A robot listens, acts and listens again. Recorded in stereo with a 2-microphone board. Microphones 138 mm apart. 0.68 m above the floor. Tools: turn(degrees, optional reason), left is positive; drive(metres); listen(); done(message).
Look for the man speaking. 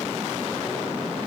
listen()
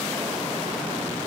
listen()
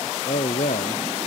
turn(degrees=90)
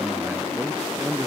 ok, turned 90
done("Found it: a man speaking, straight ahead.")